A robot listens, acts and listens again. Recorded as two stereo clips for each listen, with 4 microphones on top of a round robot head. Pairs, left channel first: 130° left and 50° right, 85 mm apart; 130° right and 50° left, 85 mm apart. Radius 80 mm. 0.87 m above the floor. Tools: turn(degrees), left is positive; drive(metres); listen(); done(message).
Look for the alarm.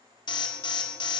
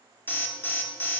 turn(degrees=160)
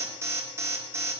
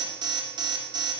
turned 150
turn(degrees=15)
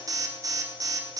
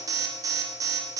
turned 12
done("Facing the alarm.")